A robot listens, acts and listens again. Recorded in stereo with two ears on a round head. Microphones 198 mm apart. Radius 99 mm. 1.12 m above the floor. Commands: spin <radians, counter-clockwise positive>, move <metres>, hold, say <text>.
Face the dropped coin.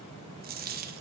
spin -0.70
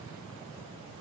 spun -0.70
hold
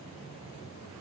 say I heard a dropped coin, but can't make it out now. It was about straight ahead or 100° right.